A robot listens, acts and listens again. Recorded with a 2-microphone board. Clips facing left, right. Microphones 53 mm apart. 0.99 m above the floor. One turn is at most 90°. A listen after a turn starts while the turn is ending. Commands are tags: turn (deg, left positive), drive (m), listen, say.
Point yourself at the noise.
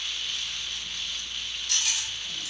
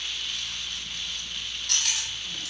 <turn deg="-65"/>
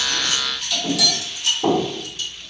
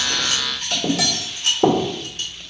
<turn deg="-50"/>
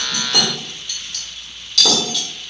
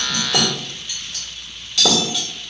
<turn deg="-15"/>
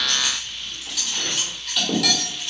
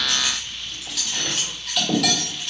<say>Found it: cutlery clinking, straight ahead, 1 to 2 m away.</say>